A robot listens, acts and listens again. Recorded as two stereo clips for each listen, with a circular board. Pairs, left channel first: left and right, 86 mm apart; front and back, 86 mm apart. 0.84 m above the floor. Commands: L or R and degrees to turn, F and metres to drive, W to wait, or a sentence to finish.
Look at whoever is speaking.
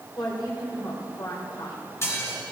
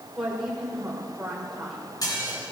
L95
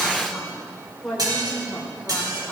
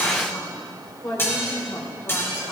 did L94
Facing the woman speaking.